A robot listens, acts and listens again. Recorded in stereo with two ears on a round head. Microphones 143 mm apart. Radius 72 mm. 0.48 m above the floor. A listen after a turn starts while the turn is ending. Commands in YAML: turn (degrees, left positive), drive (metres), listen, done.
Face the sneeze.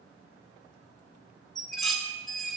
listen: true
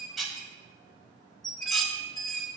listen: true
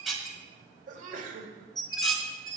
turn: -50
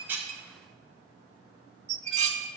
listen: true
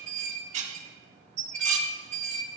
done: "I heard a sneeze, but can't make it out now. It was about straight ahead or 80° right."